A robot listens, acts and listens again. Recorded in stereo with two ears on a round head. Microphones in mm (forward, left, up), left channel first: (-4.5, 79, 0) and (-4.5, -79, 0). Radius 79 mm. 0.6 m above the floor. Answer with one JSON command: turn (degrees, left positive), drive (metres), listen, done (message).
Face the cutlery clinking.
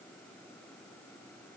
{"listen": true}
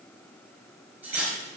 {"turn": -30}
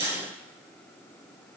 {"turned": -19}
{"turn": -150}
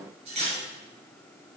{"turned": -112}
{"turn": -40}
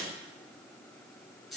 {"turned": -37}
{"done": "Facing the cutlery clinking, over 4 m away."}